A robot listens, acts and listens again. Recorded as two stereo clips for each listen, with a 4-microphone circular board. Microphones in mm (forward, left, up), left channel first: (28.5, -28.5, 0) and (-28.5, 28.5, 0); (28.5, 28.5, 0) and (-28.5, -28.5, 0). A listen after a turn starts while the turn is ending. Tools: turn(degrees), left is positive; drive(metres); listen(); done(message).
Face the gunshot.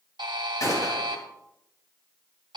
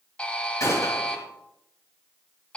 done("Found it: a gunshot, straight ahead.")